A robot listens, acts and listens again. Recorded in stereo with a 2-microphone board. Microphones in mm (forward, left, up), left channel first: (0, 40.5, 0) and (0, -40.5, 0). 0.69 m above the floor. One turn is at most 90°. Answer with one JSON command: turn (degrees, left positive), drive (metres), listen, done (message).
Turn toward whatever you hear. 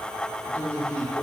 {"turn": 30}
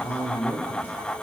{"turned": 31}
{"turn": 90}
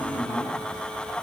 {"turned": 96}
{"turn": 55}
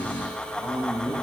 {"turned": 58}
{"turn": 25}
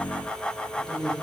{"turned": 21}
{"done": "Facing the man speaking, 2 to 4 m away."}